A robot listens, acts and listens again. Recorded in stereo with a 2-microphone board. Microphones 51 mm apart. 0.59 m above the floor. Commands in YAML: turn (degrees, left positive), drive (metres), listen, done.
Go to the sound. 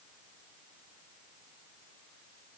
listen: true
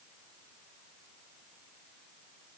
listen: true
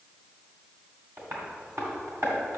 turn: -60
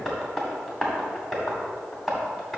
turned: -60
drive: 1.0
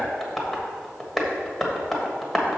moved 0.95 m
drive: 1.0
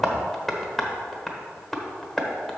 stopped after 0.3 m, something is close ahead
done: "I am next to the tapping."